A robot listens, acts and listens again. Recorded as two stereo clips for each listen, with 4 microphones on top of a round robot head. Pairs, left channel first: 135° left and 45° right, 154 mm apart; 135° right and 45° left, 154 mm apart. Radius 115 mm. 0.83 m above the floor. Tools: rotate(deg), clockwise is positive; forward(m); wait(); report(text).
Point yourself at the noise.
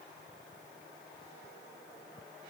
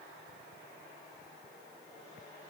wait()
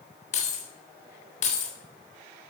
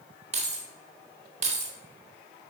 rotate(-90)
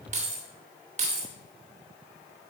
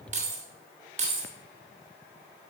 report("Facing the keys jangling.")